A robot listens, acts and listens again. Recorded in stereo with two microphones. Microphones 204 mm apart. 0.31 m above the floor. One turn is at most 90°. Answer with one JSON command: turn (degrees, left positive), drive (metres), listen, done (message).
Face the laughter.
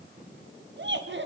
{"turn": -60}
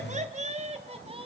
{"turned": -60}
{"turn": -25}
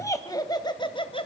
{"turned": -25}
{"turn": 25}
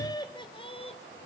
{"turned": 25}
{"turn": 30}
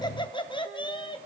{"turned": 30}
{"turn": 25}
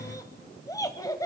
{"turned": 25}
{"turn": 15}
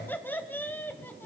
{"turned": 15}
{"turn": 10}
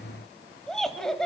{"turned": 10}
{"done": "Facing the laughter."}